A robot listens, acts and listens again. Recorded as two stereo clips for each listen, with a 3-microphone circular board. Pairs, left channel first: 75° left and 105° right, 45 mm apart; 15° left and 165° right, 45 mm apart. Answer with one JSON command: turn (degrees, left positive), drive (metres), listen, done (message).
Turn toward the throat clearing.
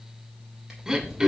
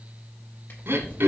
{"turn": -175}
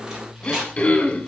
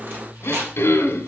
{"turn": 20}
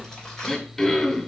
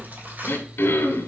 {"done": "Facing the throat clearing."}